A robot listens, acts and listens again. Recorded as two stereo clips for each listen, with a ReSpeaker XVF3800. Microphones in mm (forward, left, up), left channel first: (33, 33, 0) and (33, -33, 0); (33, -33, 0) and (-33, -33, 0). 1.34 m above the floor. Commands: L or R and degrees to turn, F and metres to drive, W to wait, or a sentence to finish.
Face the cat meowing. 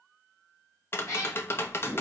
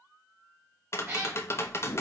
L130
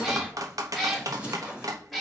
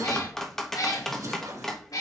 Found it: a cat meowing, straight ahead.